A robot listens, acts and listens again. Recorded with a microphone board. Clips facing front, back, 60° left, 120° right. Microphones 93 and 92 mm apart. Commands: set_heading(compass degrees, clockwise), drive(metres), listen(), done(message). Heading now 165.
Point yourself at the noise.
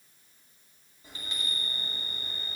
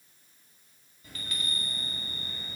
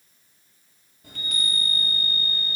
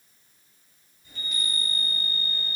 set_heading(100)
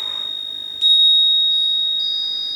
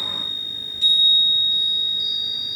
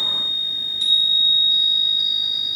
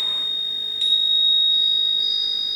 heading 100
set_heading(110)
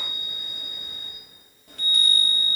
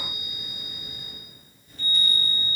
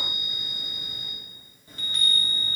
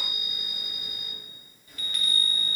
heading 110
done("Found it: a chime, straight ahead.")